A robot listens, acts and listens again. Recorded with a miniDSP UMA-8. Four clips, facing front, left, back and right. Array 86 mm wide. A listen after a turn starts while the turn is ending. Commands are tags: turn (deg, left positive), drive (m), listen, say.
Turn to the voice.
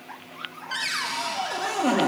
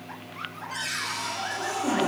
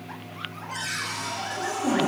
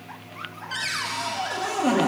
<listen/>
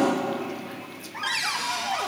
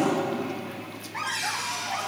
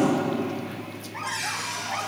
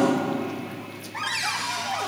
<listen/>
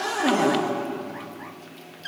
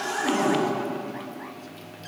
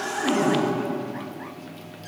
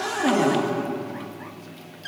<say>I can't make out anyone speaking, only a cupboard door.</say>